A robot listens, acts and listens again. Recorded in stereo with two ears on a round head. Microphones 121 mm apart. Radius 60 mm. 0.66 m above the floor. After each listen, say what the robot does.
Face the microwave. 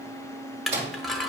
Turn 45° right.
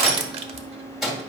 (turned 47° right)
Found it: a microwave, straight ahead, 1 to 2 m away.